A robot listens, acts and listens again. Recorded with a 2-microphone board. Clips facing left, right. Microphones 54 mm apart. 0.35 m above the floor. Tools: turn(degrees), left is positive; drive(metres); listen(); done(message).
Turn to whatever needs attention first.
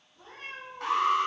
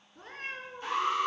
turn(degrees=65)
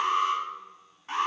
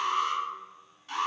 turn(degrees=40)
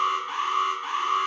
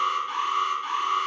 turn(degrees=15)
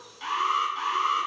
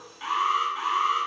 done("Found it: an alarm, straight ahead, 2 to 4 m away.")